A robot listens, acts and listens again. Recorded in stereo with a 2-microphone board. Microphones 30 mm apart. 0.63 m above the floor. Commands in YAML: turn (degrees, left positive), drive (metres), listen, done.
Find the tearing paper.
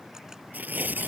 turn: -90
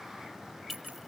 listen: true
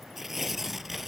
done: "Facing the tearing paper."